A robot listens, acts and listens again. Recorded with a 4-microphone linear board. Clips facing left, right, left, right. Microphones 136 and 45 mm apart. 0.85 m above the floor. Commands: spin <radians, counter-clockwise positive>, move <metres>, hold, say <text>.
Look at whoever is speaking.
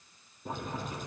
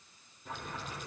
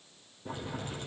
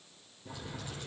hold
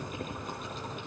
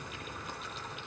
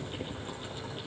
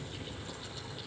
hold
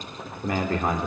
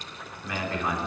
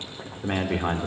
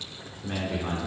spin 0.87
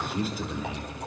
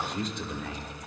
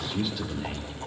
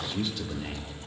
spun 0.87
say Facing the man speaking, 2 to 4 m away.